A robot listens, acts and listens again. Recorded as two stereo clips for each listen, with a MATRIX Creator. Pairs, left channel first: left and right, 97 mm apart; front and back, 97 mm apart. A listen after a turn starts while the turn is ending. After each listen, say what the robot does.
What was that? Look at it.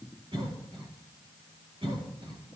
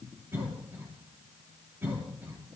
Turn 115° right.
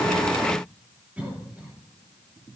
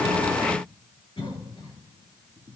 Turn 15° right.
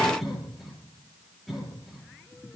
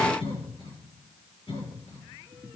Found it: a cough, straight ahead.